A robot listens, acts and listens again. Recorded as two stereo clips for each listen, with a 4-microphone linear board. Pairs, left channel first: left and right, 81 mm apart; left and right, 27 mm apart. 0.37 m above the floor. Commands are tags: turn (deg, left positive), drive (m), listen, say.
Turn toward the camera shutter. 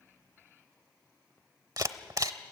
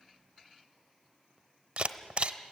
<turn deg="-50"/>
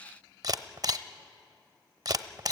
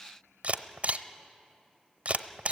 <turn deg="-70"/>
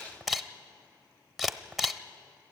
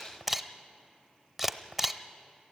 <say>Facing the camera shutter.</say>